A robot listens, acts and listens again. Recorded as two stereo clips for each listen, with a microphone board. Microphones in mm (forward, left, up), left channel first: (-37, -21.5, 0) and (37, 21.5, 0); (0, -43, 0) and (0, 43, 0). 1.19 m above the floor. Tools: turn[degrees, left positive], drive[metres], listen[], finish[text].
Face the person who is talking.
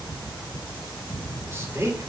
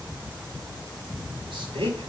Thought: The man speaking: 90° left.
Action: turn[90]
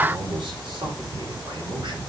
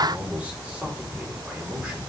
Thought: The man speaking is now 15° left.
Action: turn[15]
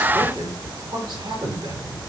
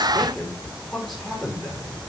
Action: finish[Found it: a man speaking, straight ahead.]